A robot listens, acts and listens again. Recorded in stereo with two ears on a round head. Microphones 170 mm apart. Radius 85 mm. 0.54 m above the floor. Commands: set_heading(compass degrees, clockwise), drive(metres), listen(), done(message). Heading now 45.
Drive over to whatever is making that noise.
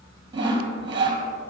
set_heading(70)
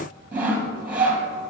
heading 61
set_heading(71)
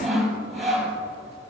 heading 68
drive(1.0)
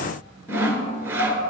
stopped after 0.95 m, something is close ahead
set_heading(78)
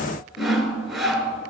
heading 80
done("I am next to the sawing.")